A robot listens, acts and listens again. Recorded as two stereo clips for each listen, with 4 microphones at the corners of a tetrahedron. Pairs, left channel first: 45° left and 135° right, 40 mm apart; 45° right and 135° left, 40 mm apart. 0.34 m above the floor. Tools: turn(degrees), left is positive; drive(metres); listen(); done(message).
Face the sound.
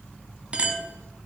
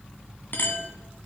turn(degrees=-70)
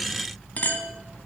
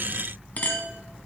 done("Found it: a clink, straight ahead.")